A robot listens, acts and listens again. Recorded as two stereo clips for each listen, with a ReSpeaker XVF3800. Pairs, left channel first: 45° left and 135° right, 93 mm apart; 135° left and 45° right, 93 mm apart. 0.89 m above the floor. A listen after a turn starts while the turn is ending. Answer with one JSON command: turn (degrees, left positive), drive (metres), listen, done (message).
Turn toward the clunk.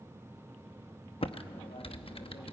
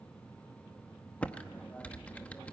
{"listen": true}
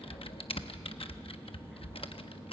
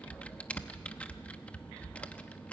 {"listen": true}
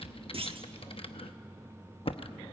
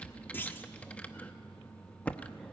{"turn": -155}
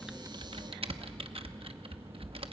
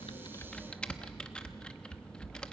{"done": "I heard a clunk from this way, but can't make it out now."}